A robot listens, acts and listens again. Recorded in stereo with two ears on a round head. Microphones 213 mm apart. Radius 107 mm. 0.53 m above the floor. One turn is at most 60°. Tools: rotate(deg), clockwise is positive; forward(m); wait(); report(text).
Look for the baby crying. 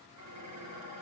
wait()
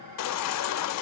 rotate(-60)
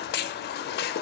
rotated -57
rotate(-40)
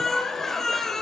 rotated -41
report("Facing the baby crying, under 1 m away.")